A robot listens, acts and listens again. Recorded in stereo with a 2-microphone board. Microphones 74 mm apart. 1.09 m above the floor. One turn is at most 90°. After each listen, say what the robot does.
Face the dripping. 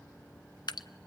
Turn 70° left.
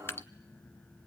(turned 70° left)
Turn 35° left.
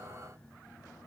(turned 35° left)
Keep listening.
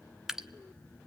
Found it: dripping, straight ahead, under 1 m away.